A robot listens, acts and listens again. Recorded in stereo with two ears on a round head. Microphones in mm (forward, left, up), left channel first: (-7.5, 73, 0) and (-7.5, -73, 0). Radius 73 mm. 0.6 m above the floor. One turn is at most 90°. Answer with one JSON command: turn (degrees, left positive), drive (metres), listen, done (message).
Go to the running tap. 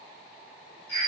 {"listen": true}
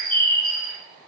{"listen": true}
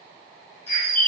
{"done": "I can't make out a running tap, only a bird."}